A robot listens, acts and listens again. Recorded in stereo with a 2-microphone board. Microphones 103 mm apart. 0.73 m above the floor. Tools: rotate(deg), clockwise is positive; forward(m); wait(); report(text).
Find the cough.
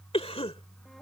rotate(-65)
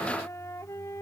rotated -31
wait()
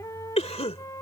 rotate(-85)
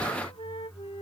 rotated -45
rotate(-40)
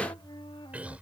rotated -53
rotate(15)
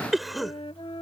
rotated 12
report("Found it: a cough, straight ahead.")